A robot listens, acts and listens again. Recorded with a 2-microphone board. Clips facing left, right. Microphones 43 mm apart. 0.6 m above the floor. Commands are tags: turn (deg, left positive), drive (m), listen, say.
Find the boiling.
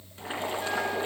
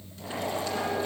<turn deg="35"/>
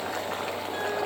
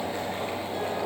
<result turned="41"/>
<turn deg="105"/>
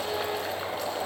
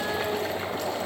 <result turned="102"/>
<say>Facing the boiling, 2 to 4 m away.</say>